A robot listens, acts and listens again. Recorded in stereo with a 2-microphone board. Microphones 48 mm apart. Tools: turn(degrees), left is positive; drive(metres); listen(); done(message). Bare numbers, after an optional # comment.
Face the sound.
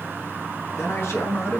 # The man speaking: about 55° left or 125° left.
turn(55)
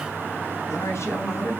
# So it is at 70° left.
turn(70)
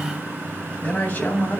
# The man speaking is now 35° left.
turn(35)
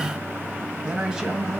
# The man speaking is now 15° right.
turn(-15)
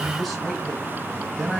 done("Found it: a man speaking, straight ahead, 2 to 4 m away.")